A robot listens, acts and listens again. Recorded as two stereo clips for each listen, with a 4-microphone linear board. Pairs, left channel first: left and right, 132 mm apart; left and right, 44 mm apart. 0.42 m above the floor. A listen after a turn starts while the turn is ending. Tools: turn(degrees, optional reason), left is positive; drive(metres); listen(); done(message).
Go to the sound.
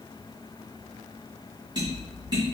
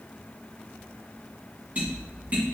turn(degrees=-30, reason="The tapping: about 30° right or 150° right.")
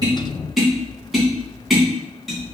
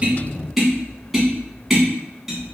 drive(metres=1.0)
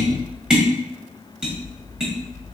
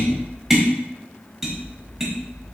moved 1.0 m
drive(metres=1.0)
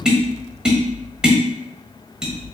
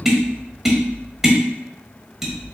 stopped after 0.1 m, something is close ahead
done("I am next to the tapping.")